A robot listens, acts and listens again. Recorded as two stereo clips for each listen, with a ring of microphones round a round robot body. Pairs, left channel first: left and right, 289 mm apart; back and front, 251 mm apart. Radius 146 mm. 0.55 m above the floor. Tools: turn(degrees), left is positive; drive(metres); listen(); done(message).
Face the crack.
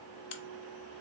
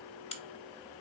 turn(degrees=110)
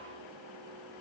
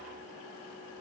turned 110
done("Facing where the crack came from. I can't hear it now.")